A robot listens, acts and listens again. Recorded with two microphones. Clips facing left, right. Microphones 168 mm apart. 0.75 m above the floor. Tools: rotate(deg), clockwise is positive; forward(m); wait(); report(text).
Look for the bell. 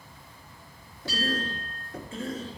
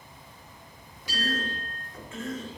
rotate(15)
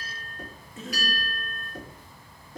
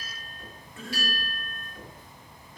rotate(150)
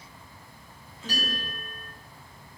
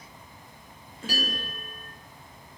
rotate(10)
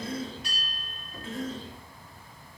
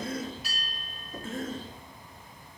report("Found it: a bell, straight ahead, 2 to 4 m away.")